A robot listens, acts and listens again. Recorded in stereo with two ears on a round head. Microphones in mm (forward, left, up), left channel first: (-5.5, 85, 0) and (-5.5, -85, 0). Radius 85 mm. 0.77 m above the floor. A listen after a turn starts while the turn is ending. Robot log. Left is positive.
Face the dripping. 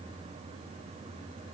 cmd idle
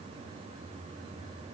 cmd idle
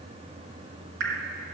note: The dripping: about 60° right or 120° right.
cmd yaw -60
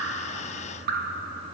note: So it is at 55° right.
cmd yaw -55
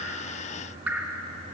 note: The dripping is now 10° right.
cmd yaw -10
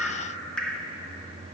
end: Found it: dripping, straight ahead, under 1 m away.